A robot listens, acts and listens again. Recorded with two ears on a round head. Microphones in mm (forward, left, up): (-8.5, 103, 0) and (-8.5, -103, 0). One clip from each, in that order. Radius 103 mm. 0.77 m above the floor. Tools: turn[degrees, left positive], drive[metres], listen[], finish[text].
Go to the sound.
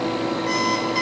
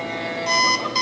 Thought: The alarm clock: about 25° right or 155° right.
Action: turn[-25]
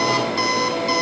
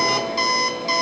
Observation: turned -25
Action: drive[1.0]
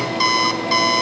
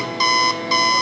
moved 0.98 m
Action: drive[1.0]
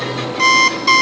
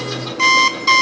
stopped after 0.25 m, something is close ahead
Action: finish[I am next to the alarm clock.]